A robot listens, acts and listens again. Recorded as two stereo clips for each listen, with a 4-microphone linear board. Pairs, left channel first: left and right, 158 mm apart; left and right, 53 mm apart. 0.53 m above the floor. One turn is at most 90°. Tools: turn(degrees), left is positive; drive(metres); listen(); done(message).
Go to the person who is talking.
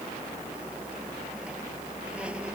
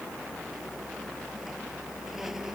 listen()
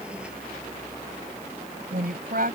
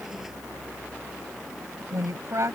turn(degrees=-70)
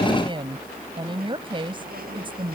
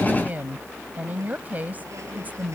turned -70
turn(degrees=-35)
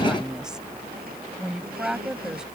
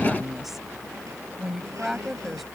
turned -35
drive(metres=1.0)
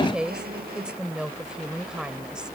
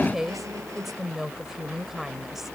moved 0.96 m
drive(metres=1.0)
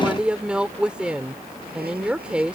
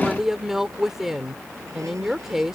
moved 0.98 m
turn(degrees=-10)
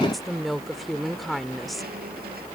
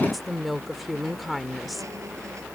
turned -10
drive(metres=1.0)
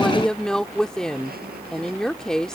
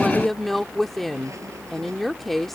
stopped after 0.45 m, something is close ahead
done("Arrived at the woman speaking, straight ahead.")